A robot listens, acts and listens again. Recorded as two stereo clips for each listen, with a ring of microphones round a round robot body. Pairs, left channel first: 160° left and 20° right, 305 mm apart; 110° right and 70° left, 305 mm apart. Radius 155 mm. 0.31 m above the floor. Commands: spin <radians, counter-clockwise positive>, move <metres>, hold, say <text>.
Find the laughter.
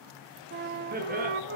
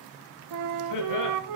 spin -1.48
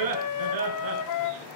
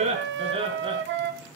say Facing the laughter, over 4 m away.